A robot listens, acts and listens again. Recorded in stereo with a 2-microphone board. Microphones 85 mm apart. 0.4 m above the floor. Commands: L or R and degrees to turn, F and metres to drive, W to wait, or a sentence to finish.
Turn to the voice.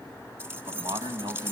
R70
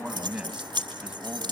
R15
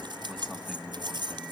Facing the man speaking, 2 to 4 m away.